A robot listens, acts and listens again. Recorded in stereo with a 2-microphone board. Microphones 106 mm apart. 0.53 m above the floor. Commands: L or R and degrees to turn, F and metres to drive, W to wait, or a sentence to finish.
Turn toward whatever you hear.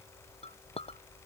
L70
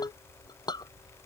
L40
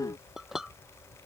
Found it: a clink, straight ahead.